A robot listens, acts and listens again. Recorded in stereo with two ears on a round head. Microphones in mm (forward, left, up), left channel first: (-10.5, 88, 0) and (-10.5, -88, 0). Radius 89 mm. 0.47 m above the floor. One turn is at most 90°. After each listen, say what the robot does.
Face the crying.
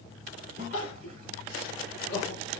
Turn 90° left.
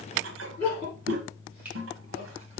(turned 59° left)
Turn 30° left.
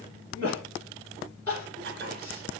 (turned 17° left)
Turn 10° left.
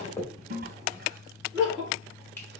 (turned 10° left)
Found it: crying, straight ahead.